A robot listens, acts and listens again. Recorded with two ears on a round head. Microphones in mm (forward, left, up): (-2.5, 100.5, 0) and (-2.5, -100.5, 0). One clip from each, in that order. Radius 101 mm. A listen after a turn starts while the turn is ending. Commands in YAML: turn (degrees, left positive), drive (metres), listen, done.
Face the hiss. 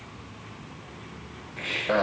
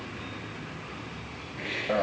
turn: 65
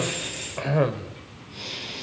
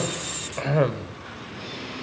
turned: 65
turn: 50
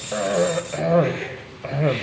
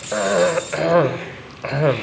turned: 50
listen: true
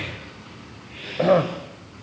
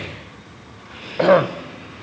done: "Found it: a hiss, straight ahead, over 4 m away."